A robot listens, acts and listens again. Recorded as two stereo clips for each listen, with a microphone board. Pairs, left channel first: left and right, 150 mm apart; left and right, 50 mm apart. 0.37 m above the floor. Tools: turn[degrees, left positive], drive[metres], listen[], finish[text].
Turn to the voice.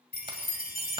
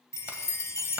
Action: listen[]
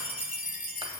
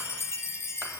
Action: listen[]
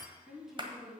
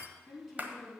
Action: turn[-30]
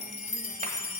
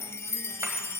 Action: listen[]
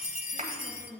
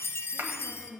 Thought: So it is at 140° right.
Action: turn[-140]
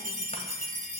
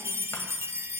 Action: listen[]
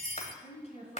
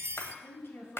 Thought: The woman speaking is now 45° left.
Action: turn[45]
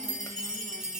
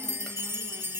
Action: listen[]
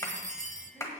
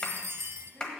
Action: listen[]
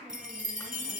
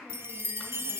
Action: finish[Facing where the woman speaking came from. I can't hear it now.]